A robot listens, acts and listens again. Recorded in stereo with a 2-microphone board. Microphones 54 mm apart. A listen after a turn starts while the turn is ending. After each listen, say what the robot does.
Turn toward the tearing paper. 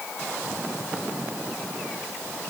Keep listening.
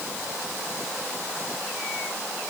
Keep listening.
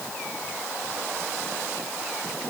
I can't make out tearing paper.